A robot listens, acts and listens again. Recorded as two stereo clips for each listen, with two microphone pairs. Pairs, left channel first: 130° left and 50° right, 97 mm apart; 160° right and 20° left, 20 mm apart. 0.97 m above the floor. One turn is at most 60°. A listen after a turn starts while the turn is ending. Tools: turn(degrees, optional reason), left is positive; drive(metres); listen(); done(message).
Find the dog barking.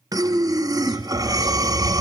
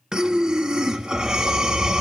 turn(degrees=60, reason="The dog barking: 80° left.")
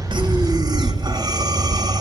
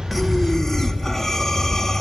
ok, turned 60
done("Facing the dog barking, over 4 m away.")